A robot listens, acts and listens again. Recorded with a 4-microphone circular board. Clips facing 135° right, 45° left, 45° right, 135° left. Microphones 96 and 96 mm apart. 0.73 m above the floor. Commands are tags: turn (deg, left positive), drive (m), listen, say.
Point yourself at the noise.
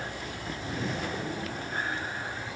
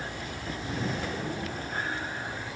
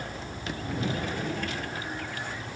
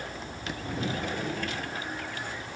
<listen/>
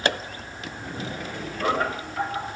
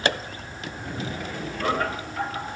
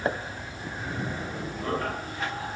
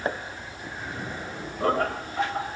<turn deg="145"/>
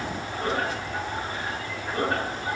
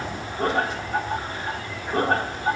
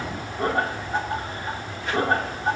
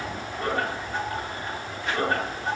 <turn deg="10"/>
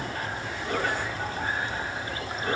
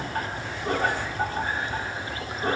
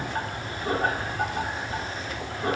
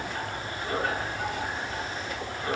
<say>Facing the laughter, over 4 m away.</say>